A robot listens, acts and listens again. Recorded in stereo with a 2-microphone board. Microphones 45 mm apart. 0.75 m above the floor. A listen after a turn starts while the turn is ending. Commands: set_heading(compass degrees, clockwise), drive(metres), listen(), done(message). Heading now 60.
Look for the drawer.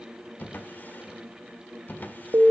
set_heading(20)
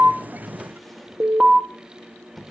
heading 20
done("Facing the drawer.")